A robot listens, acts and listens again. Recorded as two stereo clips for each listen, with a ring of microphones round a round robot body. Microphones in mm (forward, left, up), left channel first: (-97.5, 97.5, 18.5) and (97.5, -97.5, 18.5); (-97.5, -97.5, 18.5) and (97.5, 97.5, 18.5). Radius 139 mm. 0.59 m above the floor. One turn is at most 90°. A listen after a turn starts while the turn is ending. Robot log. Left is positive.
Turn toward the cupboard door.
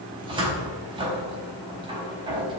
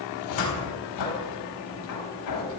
note: The cupboard door: 120° right.
cmd yaw -90
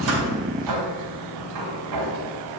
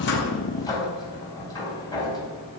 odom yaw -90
note: The cupboard door is now 60° right.
cmd yaw -60
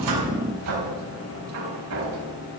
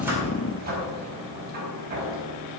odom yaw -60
note: The cupboard door is now 15° right.
cmd yaw -15
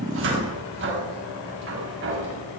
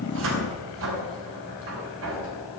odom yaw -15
end: Facing the cupboard door, over 4 m away.